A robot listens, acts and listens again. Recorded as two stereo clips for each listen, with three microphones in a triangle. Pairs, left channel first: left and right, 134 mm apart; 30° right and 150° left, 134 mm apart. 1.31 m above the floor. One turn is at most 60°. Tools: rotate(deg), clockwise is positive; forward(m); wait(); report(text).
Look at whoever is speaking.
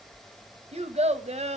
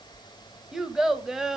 rotate(60)
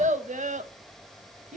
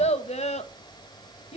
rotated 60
rotate(60)
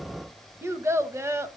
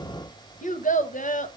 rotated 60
rotate(20)
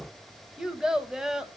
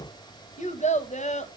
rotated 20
report("Facing the child speaking.")